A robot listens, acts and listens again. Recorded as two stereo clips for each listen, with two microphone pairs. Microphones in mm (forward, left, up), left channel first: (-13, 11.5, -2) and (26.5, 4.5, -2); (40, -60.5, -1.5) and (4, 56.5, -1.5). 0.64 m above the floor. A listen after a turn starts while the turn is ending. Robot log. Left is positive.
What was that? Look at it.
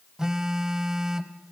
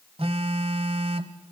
note: The phone buzzing: 65° left.
cmd yaw +65
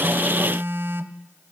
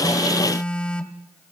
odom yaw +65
note: The phone buzzing is now 10° left.
cmd yaw +10
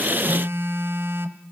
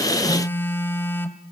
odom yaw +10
end: Facing the phone buzzing, 1 to 2 m away.